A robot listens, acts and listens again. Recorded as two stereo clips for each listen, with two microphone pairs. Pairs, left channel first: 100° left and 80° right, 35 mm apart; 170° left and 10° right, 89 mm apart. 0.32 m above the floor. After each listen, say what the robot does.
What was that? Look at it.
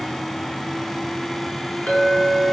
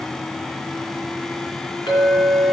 Turn 145° left.
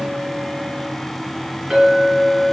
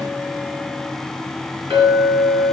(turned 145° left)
Facing the clink, 2 to 4 m away.